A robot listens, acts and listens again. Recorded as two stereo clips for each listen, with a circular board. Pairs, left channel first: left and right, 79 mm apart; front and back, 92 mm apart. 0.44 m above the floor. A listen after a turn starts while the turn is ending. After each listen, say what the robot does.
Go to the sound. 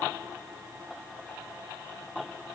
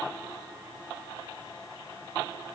Keep listening.
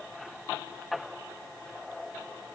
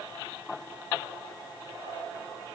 Keep listening.
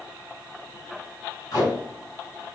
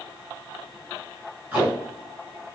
Turn 105° left.
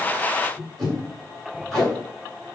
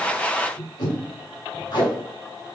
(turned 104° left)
Drive 1.0 m forward.
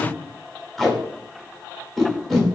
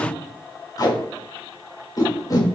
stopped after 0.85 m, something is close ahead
Arrived at the tape being pulled, straight ahead.